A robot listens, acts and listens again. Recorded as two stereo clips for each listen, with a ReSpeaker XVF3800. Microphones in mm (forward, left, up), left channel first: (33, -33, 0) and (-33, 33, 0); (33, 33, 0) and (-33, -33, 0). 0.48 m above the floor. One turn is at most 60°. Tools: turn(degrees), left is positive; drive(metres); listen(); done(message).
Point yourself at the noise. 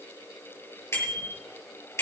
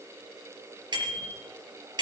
turn(degrees=-60)
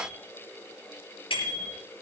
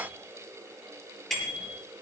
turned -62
turn(degrees=-40)
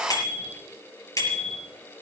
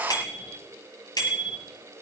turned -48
turn(degrees=10)
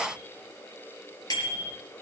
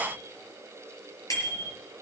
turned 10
done("Facing the bicycle bell, over 4 m away.")